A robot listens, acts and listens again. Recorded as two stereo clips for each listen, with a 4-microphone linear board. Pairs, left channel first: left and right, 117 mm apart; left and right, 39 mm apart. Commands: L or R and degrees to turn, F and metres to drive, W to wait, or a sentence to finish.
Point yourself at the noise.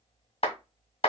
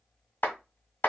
L55
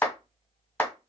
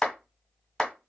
L20
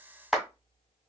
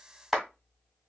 Facing the clap, 1 to 2 m away.